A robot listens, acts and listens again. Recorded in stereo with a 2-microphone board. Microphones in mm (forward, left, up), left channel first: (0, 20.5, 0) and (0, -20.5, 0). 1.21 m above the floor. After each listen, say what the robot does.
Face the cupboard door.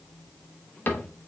Turn 60° left.
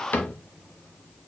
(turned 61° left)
Turn 50° left.
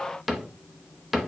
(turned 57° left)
Facing the cupboard door, under 1 m away.